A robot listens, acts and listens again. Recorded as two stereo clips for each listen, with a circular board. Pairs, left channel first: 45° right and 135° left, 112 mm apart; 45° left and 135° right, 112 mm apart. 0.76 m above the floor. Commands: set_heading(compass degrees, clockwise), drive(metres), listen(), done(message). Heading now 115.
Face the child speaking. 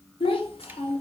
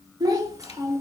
set_heading(190)
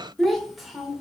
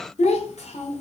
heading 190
set_heading(140)
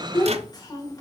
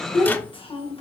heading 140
set_heading(130)
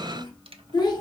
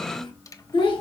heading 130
done("Found it: a child speaking, straight ahead, 2 to 4 m away.")